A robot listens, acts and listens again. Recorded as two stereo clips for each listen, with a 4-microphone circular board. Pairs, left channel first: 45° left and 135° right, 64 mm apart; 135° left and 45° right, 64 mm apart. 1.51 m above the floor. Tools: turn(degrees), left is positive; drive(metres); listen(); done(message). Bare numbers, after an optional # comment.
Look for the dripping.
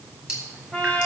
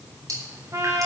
# The dripping: 55° right.
turn(-55)
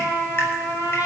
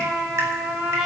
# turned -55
listen()
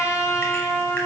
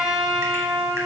listen()
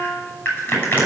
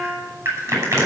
done("Facing the dripping.")